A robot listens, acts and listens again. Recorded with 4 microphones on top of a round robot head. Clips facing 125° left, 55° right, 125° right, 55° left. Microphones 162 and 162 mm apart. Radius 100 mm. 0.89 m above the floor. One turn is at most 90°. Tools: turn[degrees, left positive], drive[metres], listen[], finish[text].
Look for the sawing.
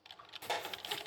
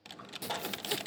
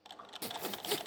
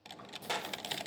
Thought: The sawing: 105° right.
Action: turn[-90]
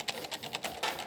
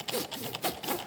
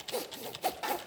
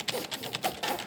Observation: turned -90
Thought: The sawing is now 40° right.
Action: turn[-40]
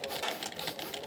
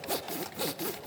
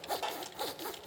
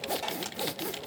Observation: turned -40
Thought: The sawing is now 15° right.
Action: turn[-15]
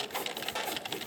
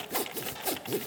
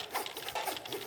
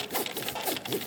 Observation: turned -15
Action: finish[Facing the sawing.]